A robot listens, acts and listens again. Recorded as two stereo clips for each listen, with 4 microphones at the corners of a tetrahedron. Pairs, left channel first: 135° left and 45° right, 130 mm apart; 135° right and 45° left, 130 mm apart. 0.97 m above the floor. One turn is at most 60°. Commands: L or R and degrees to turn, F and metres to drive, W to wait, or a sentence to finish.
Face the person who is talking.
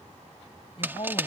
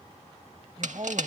L60
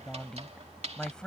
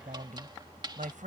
L50
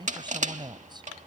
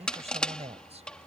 L10
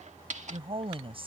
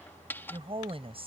Facing the woman speaking.